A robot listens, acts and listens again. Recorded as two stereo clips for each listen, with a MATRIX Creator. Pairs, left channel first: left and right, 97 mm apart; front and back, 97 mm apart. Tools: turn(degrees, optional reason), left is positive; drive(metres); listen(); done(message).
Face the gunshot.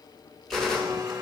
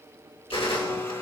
done("Facing the gunshot.")